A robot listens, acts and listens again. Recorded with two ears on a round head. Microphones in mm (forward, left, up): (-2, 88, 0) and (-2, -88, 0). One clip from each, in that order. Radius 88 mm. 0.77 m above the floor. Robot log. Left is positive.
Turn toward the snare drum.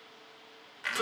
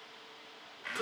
cmd idle
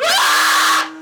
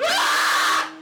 cmd idle
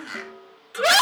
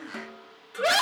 note: The snare drum: about 20° right or 160° right.
cmd yaw -20
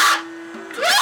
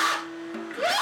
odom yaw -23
cmd idle
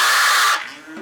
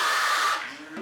cmd idle
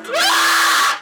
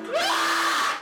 end: I heard a snare drum, but can't make it out now. It was about 5° left or 140° right.